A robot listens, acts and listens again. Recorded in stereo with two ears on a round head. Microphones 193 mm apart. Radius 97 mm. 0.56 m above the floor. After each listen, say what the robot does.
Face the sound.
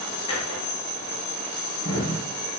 Turn 25° left.
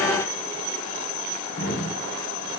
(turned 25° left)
Turn 130° left.
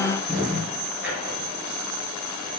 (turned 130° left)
Found it: a drawer, straight ahead, over 4 m away.